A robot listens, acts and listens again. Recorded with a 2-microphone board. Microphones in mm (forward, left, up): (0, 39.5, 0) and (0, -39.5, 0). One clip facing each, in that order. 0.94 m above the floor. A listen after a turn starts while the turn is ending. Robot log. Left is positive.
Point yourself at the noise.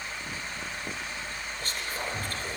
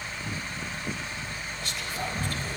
note: The whispering: about 45° left or 135° left.
cmd yaw +45
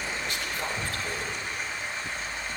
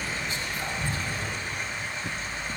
note: So it is at 95° left.
cmd yaw +95
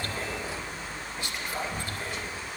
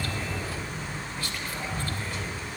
note: The whispering is now 20° left.
cmd yaw +20
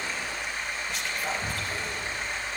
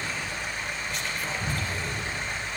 end: Facing the whispering.